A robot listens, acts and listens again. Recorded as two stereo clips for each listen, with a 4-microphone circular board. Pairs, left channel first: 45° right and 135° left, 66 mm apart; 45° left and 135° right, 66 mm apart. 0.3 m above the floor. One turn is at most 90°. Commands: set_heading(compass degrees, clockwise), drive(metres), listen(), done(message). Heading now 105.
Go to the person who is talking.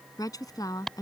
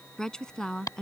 set_heading(140)
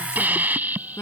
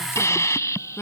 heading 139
drive(1.0)
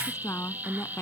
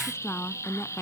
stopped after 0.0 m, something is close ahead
done("Blocked. The woman speaking is further on, straight ahead.")